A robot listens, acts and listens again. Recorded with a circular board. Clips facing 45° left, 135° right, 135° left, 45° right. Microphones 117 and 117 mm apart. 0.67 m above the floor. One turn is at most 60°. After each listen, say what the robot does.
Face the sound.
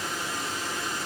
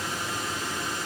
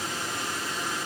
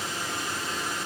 Keep listening.
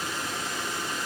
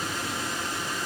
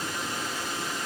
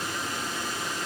Keep listening.
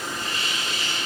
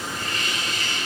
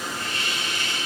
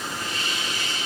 Turn 60° left.
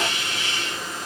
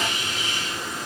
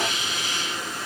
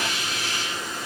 Turn 45° left.
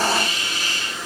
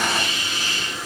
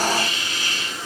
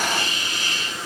Found it: a hiss, straight ahead, 2 to 4 m away.